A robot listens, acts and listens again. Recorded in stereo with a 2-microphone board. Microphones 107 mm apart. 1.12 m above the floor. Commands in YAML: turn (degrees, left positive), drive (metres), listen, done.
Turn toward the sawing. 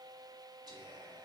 listen: true
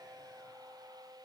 listen: true
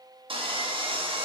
turn: -50
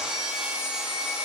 done: "Facing the sawing, under 1 m away."